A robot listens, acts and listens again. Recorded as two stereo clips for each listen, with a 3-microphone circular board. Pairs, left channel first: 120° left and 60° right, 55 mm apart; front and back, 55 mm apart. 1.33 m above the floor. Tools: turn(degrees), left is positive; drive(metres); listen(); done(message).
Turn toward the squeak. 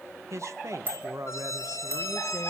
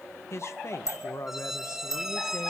turn(degrees=100)
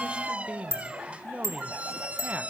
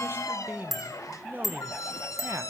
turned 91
done("Facing the squeak.")